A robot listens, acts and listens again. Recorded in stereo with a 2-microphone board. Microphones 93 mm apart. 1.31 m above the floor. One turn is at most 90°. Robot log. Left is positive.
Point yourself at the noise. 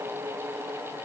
cmd idle
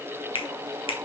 cmd yaw +90
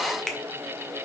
end: Found it: a finger snap, straight ahead, 1 to 2 m away.